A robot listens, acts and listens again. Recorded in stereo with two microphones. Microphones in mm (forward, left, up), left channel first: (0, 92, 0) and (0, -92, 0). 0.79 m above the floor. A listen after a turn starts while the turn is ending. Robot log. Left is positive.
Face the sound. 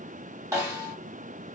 note: The snare drum: about 20° right or 160° right.
cmd yaw -20
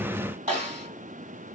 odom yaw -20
note: So it is at 140° right.
cmd yaw -140
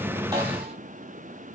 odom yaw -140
cmd idle
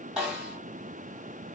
end: Found it: a snare drum, straight ahead, 1 to 2 m away.